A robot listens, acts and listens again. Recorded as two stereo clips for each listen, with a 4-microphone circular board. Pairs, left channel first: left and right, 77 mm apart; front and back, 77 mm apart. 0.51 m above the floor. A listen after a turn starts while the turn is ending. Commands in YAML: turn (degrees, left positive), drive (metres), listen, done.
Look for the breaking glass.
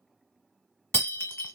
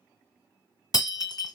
turn: 30
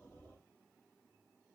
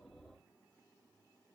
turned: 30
done: "I heard breaking glass from this way, but can't make it out now."